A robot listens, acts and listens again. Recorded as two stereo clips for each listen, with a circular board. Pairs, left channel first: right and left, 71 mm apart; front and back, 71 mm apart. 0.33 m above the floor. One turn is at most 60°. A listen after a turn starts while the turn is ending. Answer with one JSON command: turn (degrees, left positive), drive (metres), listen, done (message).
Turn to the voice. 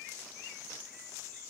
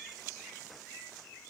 {"listen": true}
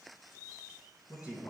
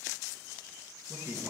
{"turn": -60}
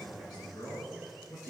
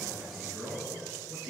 {"turn": -60}
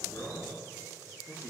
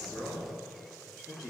{"turn": -30}
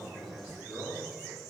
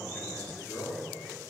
{"turn": -10}
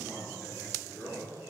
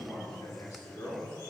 {"done": "Facing the man speaking, over 4 m away."}